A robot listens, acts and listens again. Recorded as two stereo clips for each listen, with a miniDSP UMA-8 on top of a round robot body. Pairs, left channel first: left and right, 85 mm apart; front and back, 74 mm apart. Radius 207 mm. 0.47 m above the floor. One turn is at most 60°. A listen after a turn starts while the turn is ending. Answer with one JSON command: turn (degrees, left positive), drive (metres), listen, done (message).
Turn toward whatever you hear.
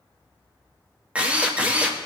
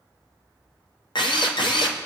{"turn": -15}
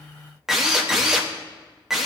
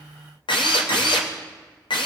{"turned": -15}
{"done": "Found it: a drill, straight ahead, 1 to 2 m away."}